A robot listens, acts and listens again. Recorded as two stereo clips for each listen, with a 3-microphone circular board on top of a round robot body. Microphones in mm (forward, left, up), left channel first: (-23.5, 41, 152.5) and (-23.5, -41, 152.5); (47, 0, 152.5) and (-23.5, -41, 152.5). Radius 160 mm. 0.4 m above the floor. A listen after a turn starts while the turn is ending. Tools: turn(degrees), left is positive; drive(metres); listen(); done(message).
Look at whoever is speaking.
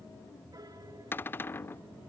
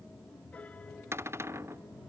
listen()
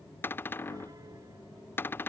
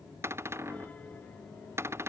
listen()
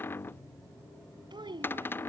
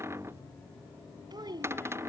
turn(degrees=-115)
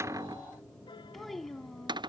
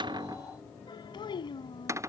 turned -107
done("Found it: a child speaking, straight ahead.")